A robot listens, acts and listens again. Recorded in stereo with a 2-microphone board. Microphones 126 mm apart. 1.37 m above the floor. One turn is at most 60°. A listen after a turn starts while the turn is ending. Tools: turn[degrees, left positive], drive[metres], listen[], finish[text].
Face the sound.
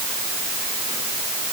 Action: listen[]
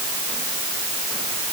Action: listen[]
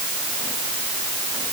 Action: finish[I can't make out anything to turn to.]